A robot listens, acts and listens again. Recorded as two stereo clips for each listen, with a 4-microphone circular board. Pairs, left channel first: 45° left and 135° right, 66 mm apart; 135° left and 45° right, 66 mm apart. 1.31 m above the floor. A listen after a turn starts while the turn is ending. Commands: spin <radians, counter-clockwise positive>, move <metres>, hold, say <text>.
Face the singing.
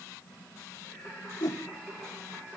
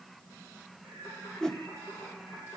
spin 2.88
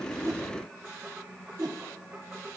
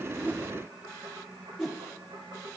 spin -0.70
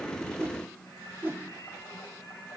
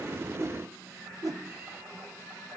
spin 0.26
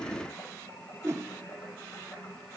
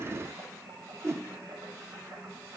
say Found it: singing, straight ahead, over 4 m away.